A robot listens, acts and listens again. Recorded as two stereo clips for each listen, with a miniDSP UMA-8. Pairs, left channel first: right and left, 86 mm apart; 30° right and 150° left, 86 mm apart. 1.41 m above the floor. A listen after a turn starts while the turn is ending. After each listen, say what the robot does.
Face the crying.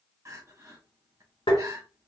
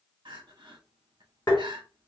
Turn 140° left.
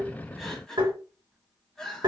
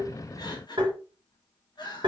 Found it: crying, straight ahead.